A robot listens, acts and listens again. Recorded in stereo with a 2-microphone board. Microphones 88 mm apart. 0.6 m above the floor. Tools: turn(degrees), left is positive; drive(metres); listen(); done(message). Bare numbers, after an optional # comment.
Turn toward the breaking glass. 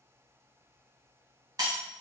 # The breaking glass: about 50° right or 130° right.
turn(-50)
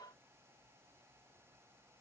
listen()
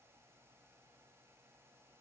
done("I heard breaking glass, but can't make it out now. It was about straight ahead or 80° right.")